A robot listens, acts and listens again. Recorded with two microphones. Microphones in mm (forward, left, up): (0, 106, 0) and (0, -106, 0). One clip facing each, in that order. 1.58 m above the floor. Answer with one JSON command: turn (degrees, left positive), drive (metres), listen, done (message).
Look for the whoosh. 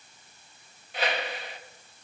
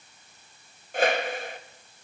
{"turn": -45}
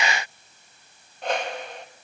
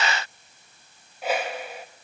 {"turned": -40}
{"done": "Found it: a whoosh, straight ahead, 1 to 2 m away."}